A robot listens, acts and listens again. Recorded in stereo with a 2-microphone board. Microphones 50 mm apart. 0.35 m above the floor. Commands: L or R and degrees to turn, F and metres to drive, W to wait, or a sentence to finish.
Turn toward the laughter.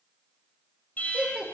R40
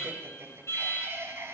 R100
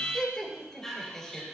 L10
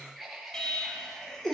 Found it: laughter, straight ahead, over 4 m away.